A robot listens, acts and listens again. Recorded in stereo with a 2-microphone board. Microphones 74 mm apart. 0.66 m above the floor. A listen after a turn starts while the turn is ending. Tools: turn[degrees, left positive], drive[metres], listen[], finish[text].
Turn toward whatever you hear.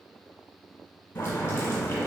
Thought: The boiling: about 35° left or 145° left.
Action: turn[35]
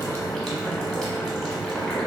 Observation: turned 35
Action: finish[Found it: boiling, straight ahead.]